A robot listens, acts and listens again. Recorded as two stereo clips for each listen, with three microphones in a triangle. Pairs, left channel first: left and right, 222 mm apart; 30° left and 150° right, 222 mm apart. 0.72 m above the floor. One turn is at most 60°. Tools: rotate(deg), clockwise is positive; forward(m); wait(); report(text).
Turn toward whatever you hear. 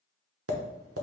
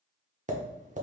rotate(60)
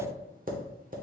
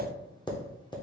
rotate(40)
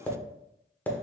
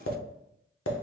rotate(-10)
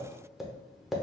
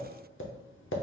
report("Found it: tapping, straight ahead.")